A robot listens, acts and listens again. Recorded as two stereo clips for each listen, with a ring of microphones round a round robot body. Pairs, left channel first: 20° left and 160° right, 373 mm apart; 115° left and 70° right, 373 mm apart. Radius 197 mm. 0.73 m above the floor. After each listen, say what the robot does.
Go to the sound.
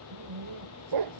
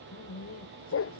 Turn 170° left.
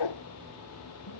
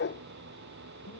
Turn 50° left.
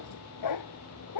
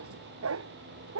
Turn 15° right.
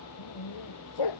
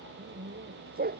Drive 1.0 m forward.
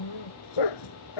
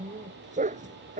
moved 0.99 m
Drive 1.0 m forward.
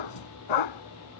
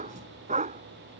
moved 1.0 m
Drive 1.0 m forward.
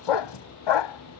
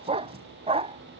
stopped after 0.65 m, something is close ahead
Arrived at the dog barking, straight ahead.